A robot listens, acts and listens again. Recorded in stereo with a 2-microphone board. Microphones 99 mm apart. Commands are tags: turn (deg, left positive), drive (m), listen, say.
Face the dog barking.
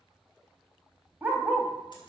<turn deg="-30"/>
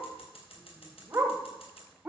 <turn deg="-30"/>
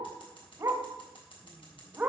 <turn deg="-15"/>
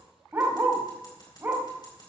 <turn deg="-25"/>
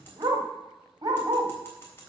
<turn deg="-135"/>
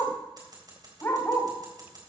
<turn deg="25"/>
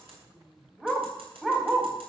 <say>Facing the dog barking, 1 to 2 m away.</say>